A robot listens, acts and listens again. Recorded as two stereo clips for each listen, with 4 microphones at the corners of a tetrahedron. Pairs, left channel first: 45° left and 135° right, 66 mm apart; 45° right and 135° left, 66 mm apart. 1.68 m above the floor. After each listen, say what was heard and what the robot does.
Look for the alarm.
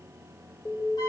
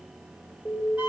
The alarm: 20° left. Turn 20° left.
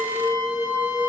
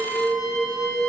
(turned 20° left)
Facing the alarm, 2 to 4 m away.